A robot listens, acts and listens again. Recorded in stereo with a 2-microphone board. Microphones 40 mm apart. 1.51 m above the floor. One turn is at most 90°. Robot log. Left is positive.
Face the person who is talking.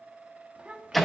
note: The child speaking: about 30° right or 150° right.
cmd yaw -30
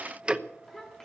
note: So it is at 10° left.
cmd yaw +10
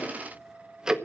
cmd idle
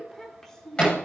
note: The child speaking is now 15° left.
cmd yaw +15
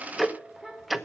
end: Found it: a child speaking, straight ahead, over 4 m away.